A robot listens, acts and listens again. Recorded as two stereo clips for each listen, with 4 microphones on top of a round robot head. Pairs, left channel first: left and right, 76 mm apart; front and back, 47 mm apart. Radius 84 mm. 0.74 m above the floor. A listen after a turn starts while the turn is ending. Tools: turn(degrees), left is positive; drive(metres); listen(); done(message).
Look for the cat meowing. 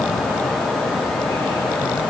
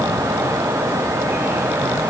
listen()
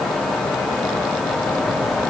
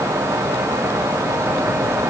listen()
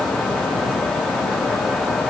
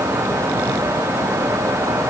done("I can't make out a cat meowing.")